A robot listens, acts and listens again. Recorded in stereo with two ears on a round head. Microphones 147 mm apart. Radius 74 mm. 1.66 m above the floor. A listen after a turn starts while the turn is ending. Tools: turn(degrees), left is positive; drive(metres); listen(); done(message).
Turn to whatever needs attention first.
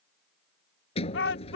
turn(degrees=90)
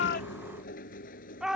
done("Found it: a shout, straight ahead.")